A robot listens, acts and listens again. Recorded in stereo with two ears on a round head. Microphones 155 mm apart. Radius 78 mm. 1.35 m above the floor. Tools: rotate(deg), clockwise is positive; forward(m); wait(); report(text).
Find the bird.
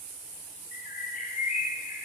rotate(-45)
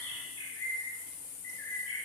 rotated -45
rotate(-90)
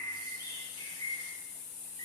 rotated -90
rotate(-20)
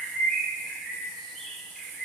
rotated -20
report("Facing the bird, 1 to 2 m away.")